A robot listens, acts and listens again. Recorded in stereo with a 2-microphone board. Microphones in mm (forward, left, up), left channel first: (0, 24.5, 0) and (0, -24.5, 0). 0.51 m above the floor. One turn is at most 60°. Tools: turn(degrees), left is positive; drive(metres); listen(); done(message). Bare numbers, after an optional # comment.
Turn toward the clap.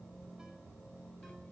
listen()
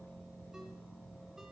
listen()
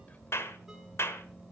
# The clap: about 65° left or 115° left.
turn(60)
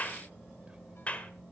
# So it is at 35° left.
turn(35)
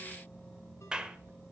# The clap is now 20° right.
turn(-20)
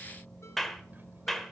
done("Found it: a clap, straight ahead, 1 to 2 m away.")